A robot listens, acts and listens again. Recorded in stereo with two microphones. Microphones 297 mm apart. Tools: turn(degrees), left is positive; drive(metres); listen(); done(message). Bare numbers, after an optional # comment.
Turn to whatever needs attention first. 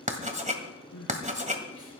turn(90)
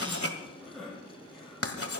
done("Facing the crying.")